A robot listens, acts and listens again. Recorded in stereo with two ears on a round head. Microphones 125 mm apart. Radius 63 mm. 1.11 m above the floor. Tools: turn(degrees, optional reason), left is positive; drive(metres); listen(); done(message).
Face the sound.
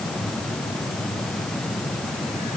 listen()
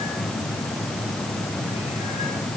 listen()
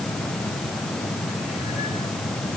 done("I can't make out anything.")